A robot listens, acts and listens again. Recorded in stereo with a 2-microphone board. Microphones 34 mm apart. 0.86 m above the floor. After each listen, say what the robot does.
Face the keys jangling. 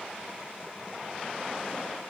Keep listening.
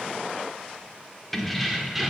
Turn 30° right.
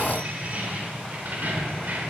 Turn 120° right.
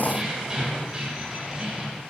Turn 15° right.
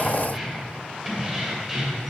Found it: keys jangling, straight ahead, 2 to 4 m away.